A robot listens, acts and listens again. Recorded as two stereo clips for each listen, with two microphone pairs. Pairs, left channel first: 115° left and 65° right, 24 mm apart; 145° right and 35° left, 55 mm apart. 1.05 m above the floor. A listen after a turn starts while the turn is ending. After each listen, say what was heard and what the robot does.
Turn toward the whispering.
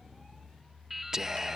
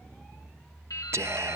Facing the whispering.